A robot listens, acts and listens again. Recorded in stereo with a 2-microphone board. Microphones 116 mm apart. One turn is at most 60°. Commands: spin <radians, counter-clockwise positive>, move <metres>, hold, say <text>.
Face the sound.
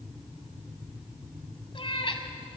spin 0.87
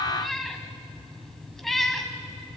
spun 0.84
say Found it: a cat meowing, straight ahead, 1 to 2 m away.